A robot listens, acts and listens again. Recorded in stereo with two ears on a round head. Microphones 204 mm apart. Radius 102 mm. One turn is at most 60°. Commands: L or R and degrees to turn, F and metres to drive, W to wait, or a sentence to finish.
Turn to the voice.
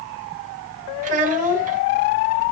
R35
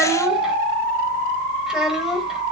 Facing the child speaking.